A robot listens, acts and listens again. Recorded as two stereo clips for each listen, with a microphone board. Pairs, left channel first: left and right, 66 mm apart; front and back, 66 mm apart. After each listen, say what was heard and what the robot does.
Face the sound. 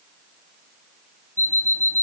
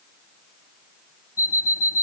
The alarm clock: 35° left. Turn 35° left.
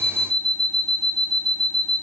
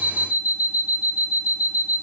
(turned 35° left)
The alarm clock is now 10° left. Turn 10° left.
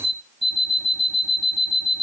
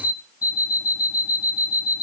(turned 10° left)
Facing the alarm clock.